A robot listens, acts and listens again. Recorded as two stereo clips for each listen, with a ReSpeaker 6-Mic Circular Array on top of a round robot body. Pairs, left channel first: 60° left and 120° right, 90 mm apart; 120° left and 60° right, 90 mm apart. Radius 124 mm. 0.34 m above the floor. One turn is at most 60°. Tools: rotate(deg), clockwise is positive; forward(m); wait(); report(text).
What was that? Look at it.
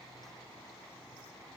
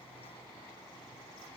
wait()
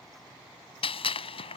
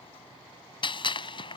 rotate(-60)
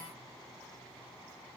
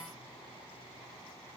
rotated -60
rotate(-25)
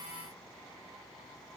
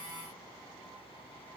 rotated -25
report("Facing where the gunshot came from. I can't hear it now.")